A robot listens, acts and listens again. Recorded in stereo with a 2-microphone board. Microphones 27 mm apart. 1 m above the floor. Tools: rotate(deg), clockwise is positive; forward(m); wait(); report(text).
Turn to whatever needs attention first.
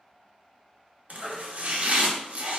rotate(-30)
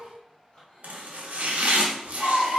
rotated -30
rotate(-145)
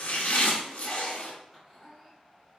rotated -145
wait()
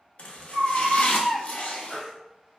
report("Facing the baby crying, 1 to 2 m away.")